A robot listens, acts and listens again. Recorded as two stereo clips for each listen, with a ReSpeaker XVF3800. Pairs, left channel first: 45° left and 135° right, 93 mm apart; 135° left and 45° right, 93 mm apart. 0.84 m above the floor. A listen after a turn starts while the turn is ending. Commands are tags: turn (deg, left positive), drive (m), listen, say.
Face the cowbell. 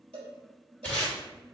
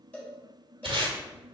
<turn deg="-150"/>
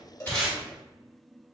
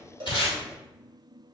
<listen/>
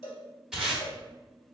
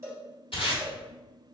<turn deg="20"/>
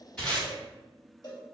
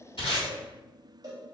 <say>Facing the cowbell.</say>